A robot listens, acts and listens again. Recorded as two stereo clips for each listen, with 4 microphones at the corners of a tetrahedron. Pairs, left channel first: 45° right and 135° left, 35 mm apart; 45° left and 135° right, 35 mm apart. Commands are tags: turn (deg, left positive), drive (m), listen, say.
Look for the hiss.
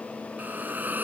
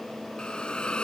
<turn deg="105"/>
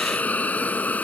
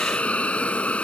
<say>Found it: a hiss, straight ahead.</say>